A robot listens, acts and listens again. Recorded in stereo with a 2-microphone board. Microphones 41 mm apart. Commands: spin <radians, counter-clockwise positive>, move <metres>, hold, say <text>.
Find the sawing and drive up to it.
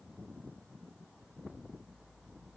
hold
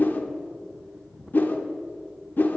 hold
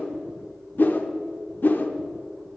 say I can't make out sawing to turn to.